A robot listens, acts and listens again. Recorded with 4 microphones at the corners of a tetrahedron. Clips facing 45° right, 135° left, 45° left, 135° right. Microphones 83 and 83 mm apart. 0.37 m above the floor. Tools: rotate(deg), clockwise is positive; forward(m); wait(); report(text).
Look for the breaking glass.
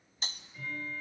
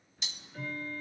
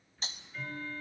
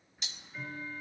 report("Found it: breaking glass, straight ahead, 1 to 2 m away.")